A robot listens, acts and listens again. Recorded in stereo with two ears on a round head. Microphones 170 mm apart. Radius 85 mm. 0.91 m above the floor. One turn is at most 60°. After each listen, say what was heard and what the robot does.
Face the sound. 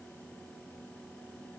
Keep listening.
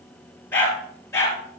Turn 30° left.
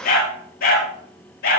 So it is at 125° left. Turn 60° left.
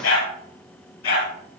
The dog barking is now 65° left. Turn 60° left.
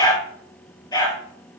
The dog barking is now 25° left. Turn 25° left.
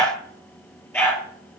The dog barking is now 10° left. Turn 10° left.
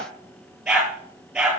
Found it: a dog barking, straight ahead.